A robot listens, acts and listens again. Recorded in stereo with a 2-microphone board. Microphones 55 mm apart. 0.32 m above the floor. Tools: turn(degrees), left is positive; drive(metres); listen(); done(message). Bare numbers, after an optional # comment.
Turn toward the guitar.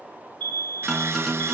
turn(30)
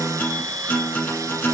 # So it is at 145° left.
turn(145)
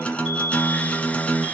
# The guitar is now 20° left.
turn(20)
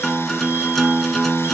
done("Found it: a guitar, straight ahead, 1 to 2 m away.")